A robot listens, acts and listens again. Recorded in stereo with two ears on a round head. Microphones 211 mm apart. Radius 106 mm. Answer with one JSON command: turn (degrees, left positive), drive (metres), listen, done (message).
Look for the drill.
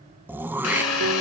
{"turn": 90}
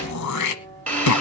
{"done": "Found it: a drill, straight ahead, over 4 m away."}